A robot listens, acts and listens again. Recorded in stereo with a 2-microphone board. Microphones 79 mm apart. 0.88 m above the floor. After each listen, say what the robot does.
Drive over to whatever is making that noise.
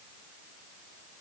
Keep listening.
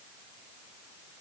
Keep listening.
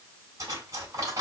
Turn 50° right.
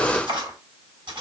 Turn 85° right.
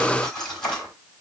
Turn 10° left.
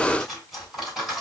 Drive 1.0 m forward.
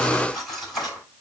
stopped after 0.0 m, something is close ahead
Something is in my way. I am facing the cutlery clinking but have not reached it.